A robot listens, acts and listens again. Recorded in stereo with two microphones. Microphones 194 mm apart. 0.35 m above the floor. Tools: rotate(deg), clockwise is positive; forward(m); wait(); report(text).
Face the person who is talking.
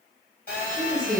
rotate(-30)
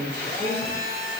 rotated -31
rotate(-140)
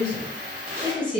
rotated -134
report("Found it: a woman speaking, straight ahead.")